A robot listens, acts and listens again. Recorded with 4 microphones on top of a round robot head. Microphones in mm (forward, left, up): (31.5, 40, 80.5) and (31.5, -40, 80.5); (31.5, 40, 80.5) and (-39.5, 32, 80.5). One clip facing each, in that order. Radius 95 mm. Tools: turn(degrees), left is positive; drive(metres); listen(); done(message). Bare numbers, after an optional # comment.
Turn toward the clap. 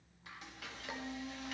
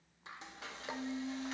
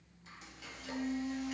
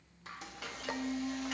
listen()
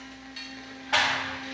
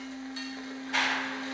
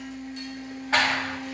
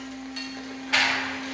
# The clap: 65° left.
turn(65)
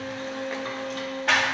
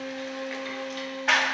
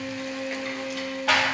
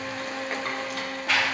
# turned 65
done("Found it: a clap, straight ahead.")